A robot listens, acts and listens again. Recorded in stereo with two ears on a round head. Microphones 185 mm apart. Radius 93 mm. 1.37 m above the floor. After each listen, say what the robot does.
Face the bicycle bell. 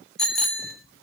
Turn 30° left.
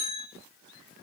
Turn 150° left.
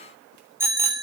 Turn 10° right.
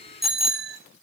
Found it: a bicycle bell, straight ahead.